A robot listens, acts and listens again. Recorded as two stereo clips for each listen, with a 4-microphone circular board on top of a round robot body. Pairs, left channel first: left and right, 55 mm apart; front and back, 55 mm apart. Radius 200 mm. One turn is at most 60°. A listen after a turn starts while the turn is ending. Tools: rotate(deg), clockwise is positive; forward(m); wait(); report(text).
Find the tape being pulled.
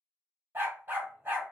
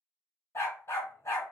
wait()
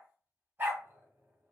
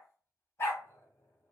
wait()
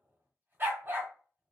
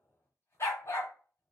report("I can't make out tape being pulled, only a dog barking.")